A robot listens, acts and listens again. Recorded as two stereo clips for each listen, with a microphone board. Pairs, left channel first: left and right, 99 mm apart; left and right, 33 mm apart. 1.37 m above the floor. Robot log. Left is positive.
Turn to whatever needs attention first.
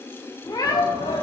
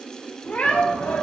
cmd yaw +90
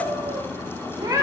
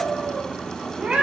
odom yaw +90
cmd idle
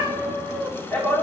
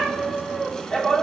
note: The shout is now 10° left.
cmd yaw +10
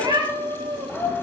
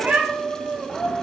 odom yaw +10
end: Found it: a shout, straight ahead.